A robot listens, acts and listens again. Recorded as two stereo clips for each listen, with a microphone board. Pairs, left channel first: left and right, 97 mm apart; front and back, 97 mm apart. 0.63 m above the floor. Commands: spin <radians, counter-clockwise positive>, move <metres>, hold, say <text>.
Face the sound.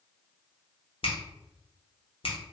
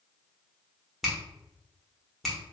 spin 1.57
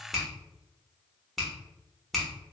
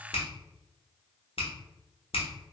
say Facing the finger snap.